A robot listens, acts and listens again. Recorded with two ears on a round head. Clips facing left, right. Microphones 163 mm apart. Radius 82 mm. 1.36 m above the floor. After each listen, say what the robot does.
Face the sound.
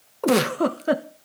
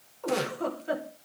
Turn 75° left.
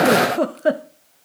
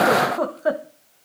Turn 30° left.
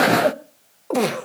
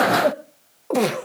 Found it: a giggle, straight ahead.